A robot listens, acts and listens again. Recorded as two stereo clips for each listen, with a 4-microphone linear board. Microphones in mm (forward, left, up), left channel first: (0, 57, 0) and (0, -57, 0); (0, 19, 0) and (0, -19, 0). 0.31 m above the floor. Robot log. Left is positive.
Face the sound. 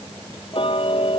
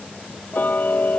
note: The ticking: about 50° left or 130° left.
cmd yaw +50
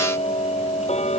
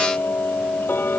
note: So it is at 75° left.
cmd yaw +75
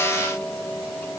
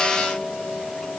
note: The ticking is now 15° left.
cmd yaw +15
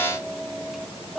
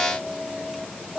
end: Facing the ticking.